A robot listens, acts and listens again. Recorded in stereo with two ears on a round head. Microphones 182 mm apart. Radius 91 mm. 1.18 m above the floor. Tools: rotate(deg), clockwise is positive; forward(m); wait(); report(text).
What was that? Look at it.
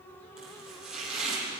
rotate(-30)
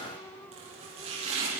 rotate(30)
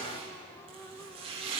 rotate(30)
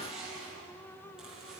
report("Facing the chopping.")